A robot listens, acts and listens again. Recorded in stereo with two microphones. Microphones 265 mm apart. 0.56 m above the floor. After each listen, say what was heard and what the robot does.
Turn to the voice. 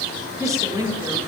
Turn 30° right.
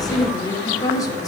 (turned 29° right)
So it is at 15° left. Turn 15° left.
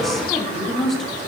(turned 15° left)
Facing the woman speaking.